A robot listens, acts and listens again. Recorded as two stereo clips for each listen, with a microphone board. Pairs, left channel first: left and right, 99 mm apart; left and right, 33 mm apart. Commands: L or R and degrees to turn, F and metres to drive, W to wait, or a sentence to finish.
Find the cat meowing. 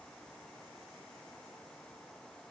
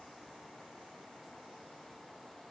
W
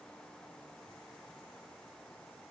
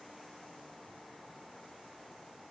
W
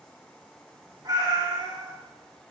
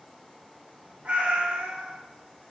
R45
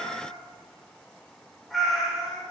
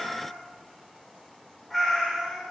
Facing the cat meowing.